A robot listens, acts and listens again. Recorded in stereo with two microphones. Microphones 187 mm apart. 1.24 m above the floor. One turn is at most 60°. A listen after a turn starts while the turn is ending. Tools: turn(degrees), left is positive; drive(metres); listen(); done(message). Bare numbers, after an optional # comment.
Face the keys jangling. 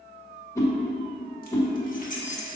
# The keys jangling: about 40° left or 140° left.
turn(40)
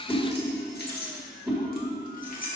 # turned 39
# The keys jangling: about 50° left or 130° left.
turn(50)
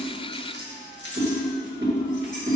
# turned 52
# So it is at 75° left.
turn(60)
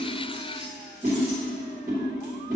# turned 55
# Nothing new. It was at 20° left.
turn(20)
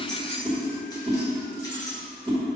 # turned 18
# The keys jangling is now 20° left.
turn(20)
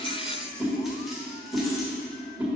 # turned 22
done("Facing the keys jangling.")